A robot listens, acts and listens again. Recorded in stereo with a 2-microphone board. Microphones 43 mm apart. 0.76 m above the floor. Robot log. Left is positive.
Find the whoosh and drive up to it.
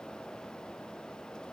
cmd idle
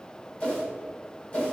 note: The whoosh: about 35° left or 145° left.
cmd yaw +35
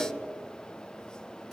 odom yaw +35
cmd fwd 1.0
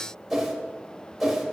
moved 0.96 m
cmd fwd 1.0
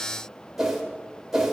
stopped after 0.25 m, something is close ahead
end: I am next to the whoosh.